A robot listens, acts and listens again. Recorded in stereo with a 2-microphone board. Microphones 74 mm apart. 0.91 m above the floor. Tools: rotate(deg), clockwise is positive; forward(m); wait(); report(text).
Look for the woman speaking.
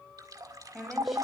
rotate(-30)
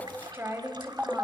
rotate(30)
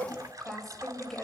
report("Found it: a woman speaking, straight ahead, over 4 m away.")